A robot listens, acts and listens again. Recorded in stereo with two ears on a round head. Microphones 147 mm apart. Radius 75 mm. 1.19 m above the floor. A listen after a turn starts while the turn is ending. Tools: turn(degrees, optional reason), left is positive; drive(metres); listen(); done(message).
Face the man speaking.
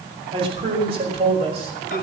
turn(degrees=-40, reason="The man speaking: about 40° right or 140° right.")
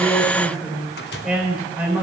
turn(degrees=-10, reason="So it is at 10° right.")
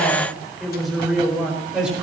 done("Facing the man speaking, over 4 m away.")